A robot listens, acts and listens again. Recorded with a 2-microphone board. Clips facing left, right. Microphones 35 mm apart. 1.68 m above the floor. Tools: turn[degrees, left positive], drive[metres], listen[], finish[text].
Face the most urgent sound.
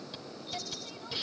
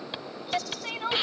Thought: The crying: about 65° right or 115° right.
Action: turn[-65]
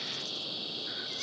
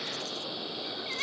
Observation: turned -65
Thought: So it is at 45° right.
Action: turn[-45]
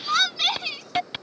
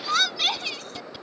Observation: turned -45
Action: finish[Facing the crying.]